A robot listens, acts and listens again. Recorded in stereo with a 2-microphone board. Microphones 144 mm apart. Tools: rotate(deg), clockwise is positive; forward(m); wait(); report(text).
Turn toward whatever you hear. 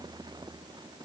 wait()
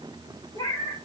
rotate(-25)
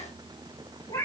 rotate(-25)
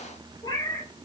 rotate(-20)
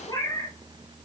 rotate(-20)
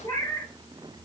rotate(-20)
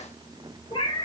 rotate(-30)
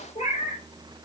rotate(-125)
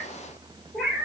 report("Found it: a cat meowing, straight ahead, 1 to 2 m away.")